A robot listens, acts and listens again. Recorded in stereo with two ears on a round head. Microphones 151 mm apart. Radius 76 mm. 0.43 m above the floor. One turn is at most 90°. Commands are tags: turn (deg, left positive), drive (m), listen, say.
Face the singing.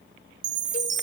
<listen/>
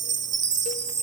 <listen/>
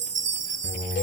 <turn deg="-30"/>
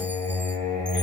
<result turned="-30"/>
<turn deg="-90"/>
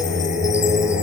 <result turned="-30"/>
<turn deg="-90"/>
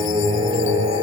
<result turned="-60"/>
<turn deg="-30"/>
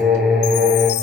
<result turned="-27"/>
<say>Facing the singing, over 4 m away.</say>